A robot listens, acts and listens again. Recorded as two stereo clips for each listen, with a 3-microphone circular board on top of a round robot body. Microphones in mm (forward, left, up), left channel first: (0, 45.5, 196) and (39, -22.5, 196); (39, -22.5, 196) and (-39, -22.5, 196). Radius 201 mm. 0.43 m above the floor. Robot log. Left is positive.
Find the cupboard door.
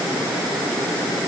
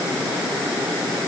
cmd idle
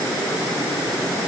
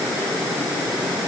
cmd idle
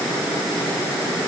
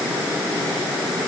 end: I can't make out a cupboard door.